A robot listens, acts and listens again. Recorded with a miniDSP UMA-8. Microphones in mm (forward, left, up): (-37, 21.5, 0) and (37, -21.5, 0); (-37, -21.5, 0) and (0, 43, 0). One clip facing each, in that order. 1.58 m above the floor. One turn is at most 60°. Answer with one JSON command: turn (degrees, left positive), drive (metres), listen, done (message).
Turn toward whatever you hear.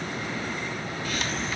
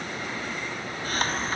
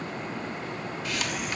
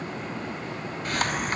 {"turn": 15}
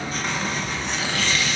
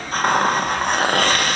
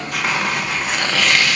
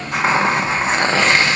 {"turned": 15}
{"done": "Facing the hiss, 1 to 2 m away."}